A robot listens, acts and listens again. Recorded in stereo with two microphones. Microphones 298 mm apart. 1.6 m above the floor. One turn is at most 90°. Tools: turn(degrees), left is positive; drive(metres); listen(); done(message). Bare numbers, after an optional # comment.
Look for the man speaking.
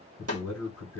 # The man speaking: about 60° left or 120° left.
turn(60)
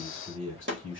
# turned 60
# So it is at 45° left.
turn(45)
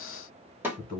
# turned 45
done("Facing the man speaking.")